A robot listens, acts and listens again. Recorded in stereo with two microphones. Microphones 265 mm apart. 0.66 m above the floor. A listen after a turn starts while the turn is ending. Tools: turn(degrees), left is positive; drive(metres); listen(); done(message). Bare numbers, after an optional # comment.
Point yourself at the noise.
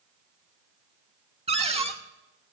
# The cupboard door: about 20° right or 160° right.
turn(-20)
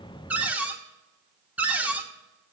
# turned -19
done("Found it: a cupboard door, straight ahead.")